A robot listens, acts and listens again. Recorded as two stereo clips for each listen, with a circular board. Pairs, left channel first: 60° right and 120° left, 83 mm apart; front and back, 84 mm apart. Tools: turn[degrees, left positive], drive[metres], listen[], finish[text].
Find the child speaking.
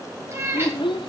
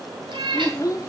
Thought: The child speaking: 45° right.
Action: turn[-45]
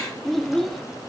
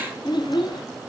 Thought: The child speaking is now 25° left.
Action: turn[25]
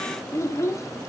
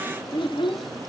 Action: finish[Found it: a child speaking, straight ahead, 1 to 2 m away.]